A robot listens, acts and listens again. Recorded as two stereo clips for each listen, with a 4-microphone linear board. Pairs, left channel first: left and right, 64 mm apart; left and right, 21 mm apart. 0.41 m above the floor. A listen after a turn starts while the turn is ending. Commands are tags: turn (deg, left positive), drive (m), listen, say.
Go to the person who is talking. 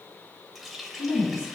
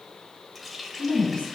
<turn deg="65"/>
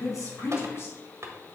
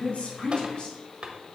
<turn deg="50"/>
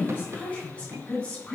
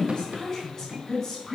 <turn deg="20"/>
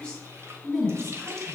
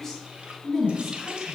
<drive m="1.0"/>
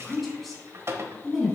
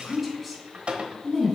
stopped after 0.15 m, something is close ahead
<say>Blocked. The woman speaking is further on, straight ahead.</say>